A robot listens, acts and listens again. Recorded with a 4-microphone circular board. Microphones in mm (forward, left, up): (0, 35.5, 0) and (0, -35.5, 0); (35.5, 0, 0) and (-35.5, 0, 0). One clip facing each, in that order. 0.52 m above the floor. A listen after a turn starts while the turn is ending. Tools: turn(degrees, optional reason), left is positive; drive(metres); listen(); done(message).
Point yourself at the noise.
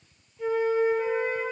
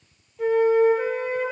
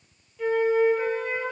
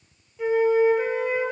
turn(degrees=-105, reason="The flute: 105° right.")
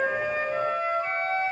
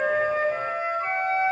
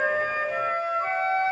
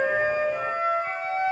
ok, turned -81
turn(degrees=-25, reason="The flute is now 25° right.")
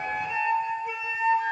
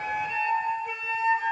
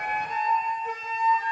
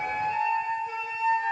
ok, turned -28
done("Found it: a flute, straight ahead, 1 to 2 m away.")